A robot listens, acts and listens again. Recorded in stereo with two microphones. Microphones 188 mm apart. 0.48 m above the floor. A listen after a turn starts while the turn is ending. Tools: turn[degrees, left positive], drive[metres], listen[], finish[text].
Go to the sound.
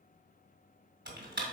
Thought: The typing on a keyboard: about 65° right or 115° right.
Action: turn[-65]
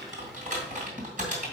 Thought: So it is at 45° right.
Action: turn[-45]
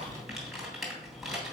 Action: drive[1.0]
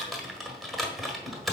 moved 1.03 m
Action: drive[1.0]
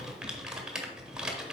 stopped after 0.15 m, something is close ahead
Action: finish[I am next to the typing on a keyboard.]